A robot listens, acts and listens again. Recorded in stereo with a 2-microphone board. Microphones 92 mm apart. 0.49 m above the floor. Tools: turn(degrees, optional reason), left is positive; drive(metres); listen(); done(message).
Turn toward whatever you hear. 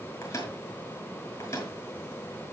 turn(degrees=35, reason="The microwave: about 35° left or 145° left.")
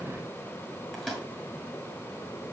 done("Facing the microwave.")